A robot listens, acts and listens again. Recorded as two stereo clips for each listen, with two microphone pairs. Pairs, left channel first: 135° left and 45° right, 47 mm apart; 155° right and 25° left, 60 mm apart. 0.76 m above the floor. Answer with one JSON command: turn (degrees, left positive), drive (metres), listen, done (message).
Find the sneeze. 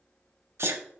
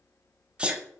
{"turn": -45}
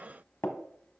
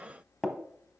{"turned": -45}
{"done": "Facing where the sneeze came from. I can't hear it now."}